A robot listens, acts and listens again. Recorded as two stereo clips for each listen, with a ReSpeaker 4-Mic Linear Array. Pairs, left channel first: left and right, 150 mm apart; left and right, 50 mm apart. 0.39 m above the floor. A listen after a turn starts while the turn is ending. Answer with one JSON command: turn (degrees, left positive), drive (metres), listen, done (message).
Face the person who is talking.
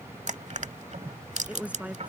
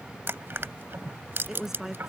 {"turn": -30}
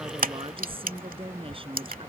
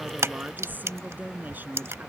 {"turn": -140}
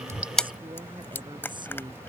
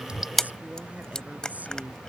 {"turn": -35}
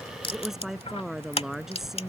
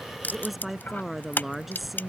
{"done": "Facing the woman speaking."}